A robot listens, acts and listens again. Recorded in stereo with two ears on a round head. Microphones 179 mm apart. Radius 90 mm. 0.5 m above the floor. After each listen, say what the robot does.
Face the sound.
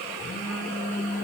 Turn 45° left.
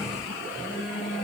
Found it: a phone buzzing, straight ahead.